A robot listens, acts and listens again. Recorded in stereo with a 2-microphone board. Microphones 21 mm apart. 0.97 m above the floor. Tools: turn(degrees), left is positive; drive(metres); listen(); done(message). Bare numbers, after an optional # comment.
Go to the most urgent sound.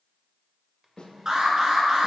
# The alarm: about 30° right or 150° right.
turn(-30)
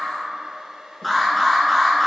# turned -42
drive(1.0)
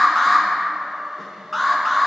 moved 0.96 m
# The alarm is now 10° left.
turn(10)
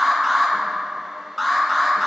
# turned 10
drive(1.0)
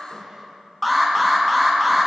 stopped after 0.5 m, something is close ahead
done("I am next to the alarm.")